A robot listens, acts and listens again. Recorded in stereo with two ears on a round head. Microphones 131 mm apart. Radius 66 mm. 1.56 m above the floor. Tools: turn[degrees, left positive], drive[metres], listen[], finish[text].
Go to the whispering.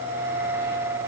Action: listen[]
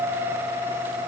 Action: listen[]
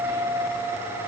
Action: finish[I can't make out whispering to turn to.]